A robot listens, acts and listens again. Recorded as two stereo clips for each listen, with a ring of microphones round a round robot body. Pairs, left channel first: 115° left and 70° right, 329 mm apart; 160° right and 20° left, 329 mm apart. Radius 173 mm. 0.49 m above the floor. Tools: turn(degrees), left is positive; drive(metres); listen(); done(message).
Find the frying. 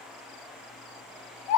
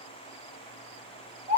listen()
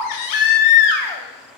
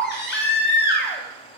listen()
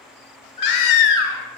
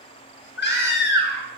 done("I can't make out frying to turn to.")